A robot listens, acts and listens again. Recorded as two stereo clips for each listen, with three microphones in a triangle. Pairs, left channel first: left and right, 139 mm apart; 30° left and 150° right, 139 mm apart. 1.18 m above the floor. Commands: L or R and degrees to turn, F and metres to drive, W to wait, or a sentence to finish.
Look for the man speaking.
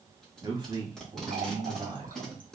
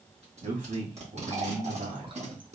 R140
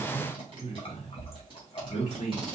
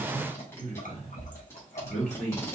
L70
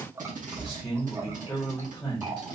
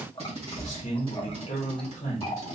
L10
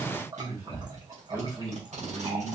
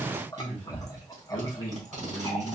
Facing the man speaking, 1 to 2 m away.